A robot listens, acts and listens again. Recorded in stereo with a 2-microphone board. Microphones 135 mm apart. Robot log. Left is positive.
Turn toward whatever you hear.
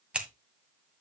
cmd yaw -30
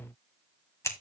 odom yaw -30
note: So it is at 20° left.
cmd yaw +20
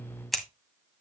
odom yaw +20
end: Found it: scissors, straight ahead, 1 to 2 m away.